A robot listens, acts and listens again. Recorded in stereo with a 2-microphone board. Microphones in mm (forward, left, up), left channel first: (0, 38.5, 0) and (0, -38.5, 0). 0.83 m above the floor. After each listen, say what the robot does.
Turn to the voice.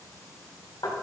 Keep listening.
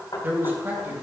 Turn 30° right.
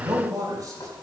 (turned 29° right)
Turn 125° right.
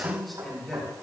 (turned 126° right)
Found it: a man speaking, straight ahead, 2 to 4 m away.